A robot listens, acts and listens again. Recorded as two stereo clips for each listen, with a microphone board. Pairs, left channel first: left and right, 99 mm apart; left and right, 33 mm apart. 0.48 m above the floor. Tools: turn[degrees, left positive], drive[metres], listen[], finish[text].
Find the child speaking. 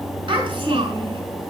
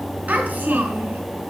Thought: The child speaking: about 50° right or 130° right.
Action: turn[-50]
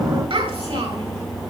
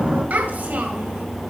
Thought: So it is at 75° right.
Action: turn[-75]
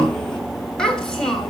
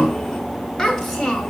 Action: finish[Facing the child speaking, 2 to 4 m away.]